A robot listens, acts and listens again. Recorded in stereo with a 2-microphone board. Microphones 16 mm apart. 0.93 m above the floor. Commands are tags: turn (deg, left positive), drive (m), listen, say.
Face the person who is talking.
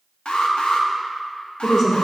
<turn deg="20"/>
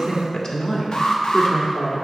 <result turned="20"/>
<turn deg="140"/>
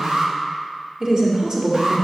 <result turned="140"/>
<turn deg="-40"/>
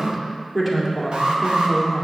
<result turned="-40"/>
<turn deg="-10"/>
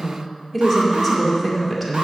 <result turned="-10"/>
<say>Found it: a woman speaking, straight ahead.</say>